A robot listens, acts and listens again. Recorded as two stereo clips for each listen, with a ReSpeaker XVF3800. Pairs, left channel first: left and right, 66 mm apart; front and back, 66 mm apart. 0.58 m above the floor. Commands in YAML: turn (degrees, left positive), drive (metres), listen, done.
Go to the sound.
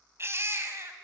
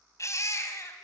turn: -40
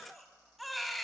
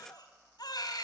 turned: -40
drive: 1.0
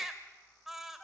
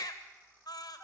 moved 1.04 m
drive: 1.0
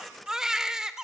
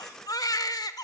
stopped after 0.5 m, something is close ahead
turn: -10
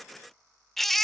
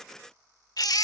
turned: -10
done: "Arrived at the baby crying, straight ahead."